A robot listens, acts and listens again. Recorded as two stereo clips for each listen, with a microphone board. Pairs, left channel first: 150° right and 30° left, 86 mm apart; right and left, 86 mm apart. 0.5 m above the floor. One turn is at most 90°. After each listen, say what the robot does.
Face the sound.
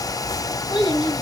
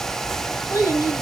Turn 90° right.
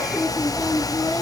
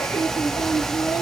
Turn 70° right.
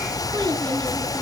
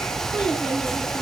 Keep listening.
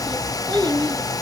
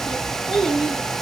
Facing the child speaking.